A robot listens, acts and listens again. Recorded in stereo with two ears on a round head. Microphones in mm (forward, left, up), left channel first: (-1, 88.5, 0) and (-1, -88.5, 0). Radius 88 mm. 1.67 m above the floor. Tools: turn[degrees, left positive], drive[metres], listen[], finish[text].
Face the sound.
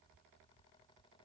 Action: listen[]
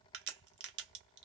Thought: The crack: about 55° right or 125° right.
Action: turn[-55]
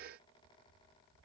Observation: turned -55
Action: listen[]
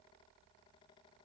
Action: finish[I heard a crack, but can't make it out now. It was about straight ahead or 70° right.]